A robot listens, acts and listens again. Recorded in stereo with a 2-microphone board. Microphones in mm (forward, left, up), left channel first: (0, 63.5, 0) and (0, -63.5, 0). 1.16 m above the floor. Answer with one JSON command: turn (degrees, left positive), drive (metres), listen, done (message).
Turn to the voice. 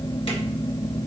{"listen": true}
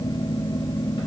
{"listen": true}
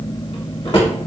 {"done": "I can't make out anyone speaking, only a drawer."}